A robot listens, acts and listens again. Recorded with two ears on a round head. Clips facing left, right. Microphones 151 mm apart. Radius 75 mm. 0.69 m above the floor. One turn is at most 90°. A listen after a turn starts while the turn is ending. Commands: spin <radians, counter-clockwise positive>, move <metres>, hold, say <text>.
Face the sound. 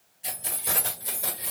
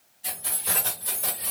spin 0.52
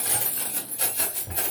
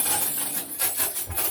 spin 1.57
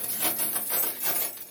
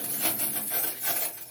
spin 1.48
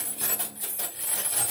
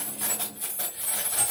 spin 0.35
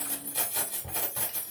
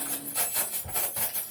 say Found it: keys jangling, straight ahead.